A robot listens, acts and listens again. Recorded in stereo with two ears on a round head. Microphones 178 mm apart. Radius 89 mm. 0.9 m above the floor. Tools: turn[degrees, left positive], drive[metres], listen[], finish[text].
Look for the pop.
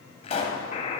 Thought: The pop: about 35° left or 145° left.
Action: turn[35]
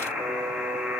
Action: listen[]
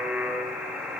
Action: finish[I heard a pop, but can't make it out now. It was about straight ahead or 110° left.]